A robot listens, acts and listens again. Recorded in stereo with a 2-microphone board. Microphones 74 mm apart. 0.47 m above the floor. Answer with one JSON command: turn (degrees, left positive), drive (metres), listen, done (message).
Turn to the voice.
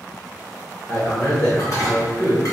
{"turn": 25}
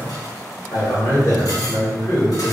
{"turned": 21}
{"turn": 130}
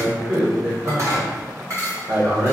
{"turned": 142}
{"turn": -15}
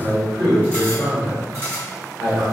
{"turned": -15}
{"done": "Found it: a man speaking, straight ahead."}